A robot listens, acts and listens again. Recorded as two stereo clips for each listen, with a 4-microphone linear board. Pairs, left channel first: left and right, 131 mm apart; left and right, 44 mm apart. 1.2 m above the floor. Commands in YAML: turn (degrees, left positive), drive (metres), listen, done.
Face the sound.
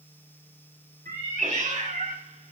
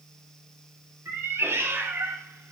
turn: -90
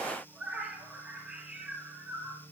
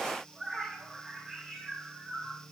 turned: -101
turn: -10
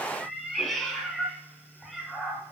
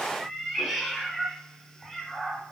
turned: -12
done: "Found it: a cat meowing, straight ahead."